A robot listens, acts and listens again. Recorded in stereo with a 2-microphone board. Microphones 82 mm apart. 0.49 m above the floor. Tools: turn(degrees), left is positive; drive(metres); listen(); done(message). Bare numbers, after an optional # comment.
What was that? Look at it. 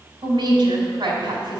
# The woman speaking: about 60° right or 120° right.
turn(-60)
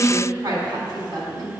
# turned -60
# So it is at 60° right.
turn(-60)
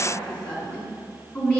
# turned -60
# The woman speaking is now 15° left.
turn(15)
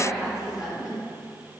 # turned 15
done("Facing the woman speaking.")